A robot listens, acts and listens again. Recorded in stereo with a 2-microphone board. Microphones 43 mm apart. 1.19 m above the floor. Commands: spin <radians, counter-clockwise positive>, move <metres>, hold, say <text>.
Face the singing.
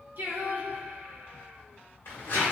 spin -0.87
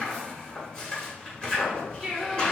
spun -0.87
say Facing the singing, 1 to 2 m away.